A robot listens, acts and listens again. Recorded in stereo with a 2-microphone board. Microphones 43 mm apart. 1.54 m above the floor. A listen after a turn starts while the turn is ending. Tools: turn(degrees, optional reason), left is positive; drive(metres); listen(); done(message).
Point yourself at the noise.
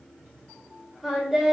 turn(degrees=-30)
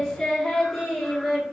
turn(degrees=-30)
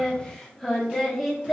turn(degrees=-30)
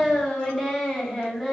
turn(degrees=30)
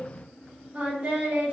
turn(degrees=-35, reason="So it is at 35° right.")
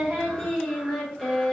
done("Found it: singing, straight ahead.")